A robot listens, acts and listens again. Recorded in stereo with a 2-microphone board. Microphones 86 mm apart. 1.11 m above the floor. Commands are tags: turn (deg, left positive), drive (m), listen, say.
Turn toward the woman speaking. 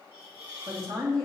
<turn deg="-70"/>
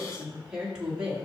<turn deg="-10"/>
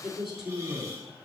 <say>Facing the woman speaking, 2 to 4 m away.</say>